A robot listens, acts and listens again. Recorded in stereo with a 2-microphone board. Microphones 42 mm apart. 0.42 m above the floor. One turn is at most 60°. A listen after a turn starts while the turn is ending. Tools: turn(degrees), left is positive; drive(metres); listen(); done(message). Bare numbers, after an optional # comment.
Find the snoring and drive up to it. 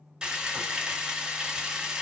listen()
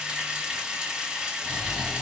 # The snoring: about 20° left or 160° left.
turn(20)
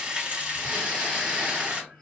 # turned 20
listen()
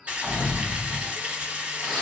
drive(1.0)
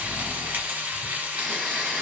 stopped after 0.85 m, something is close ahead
done("Arrived at the snoring, straight ahead.")